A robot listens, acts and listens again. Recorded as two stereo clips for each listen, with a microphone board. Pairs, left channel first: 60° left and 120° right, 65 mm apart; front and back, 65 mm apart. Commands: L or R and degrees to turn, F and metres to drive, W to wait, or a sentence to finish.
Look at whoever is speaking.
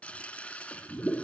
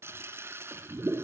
W
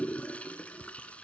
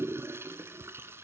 W
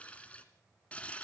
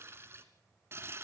I can't make out anyone speaking, only a toilet flushing.